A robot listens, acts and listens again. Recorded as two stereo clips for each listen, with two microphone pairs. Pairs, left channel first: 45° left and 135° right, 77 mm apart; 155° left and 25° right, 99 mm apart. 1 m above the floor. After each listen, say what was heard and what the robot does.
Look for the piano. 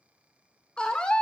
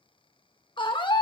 Keep listening.
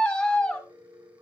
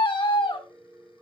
The piano: 90° right. Turn 90° right.
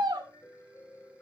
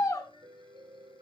Found it: a piano, straight ahead.